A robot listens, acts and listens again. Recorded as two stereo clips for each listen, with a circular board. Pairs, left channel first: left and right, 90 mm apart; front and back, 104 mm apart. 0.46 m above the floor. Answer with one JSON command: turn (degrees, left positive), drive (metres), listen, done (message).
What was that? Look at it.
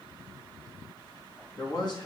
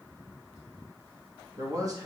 {"turn": 125}
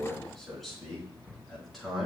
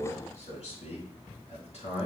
{"done": "Facing the man speaking, over 4 m away."}